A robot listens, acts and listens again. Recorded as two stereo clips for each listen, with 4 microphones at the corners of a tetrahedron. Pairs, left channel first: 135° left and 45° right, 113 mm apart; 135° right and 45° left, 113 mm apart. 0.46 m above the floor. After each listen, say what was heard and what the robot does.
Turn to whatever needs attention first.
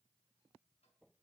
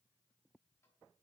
Keep listening.
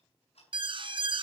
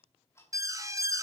The alarm: 15° right. Turn 15° right.
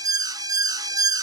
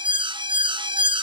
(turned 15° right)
Facing the alarm.